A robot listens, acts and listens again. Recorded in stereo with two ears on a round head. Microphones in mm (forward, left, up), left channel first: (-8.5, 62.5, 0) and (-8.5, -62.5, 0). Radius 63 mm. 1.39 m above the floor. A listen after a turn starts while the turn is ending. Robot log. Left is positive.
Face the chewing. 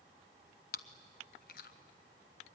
note: The chewing: about 65° left or 115° left.
cmd yaw +65
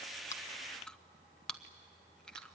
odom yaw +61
end: Facing the chewing.